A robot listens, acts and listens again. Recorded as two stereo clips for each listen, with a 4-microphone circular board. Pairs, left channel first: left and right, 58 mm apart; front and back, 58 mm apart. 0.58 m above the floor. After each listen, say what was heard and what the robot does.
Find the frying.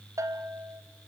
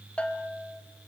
Keep listening.
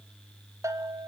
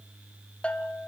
Keep listening.
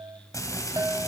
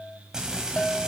The frying: 105° left. Turn 105° left.
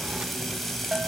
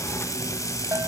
Facing the frying, 2 to 4 m away.